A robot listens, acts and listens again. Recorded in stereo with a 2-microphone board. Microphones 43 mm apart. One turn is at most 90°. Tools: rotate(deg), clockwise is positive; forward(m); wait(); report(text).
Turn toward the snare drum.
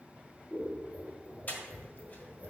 wait()
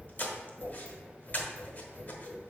wait()
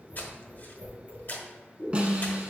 rotate(25)
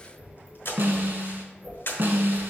rotate(90)
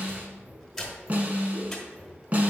rotate(35)
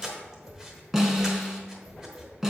rotate(10)
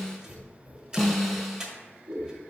report("Found it: a snare drum, straight ahead, 1 to 2 m away.")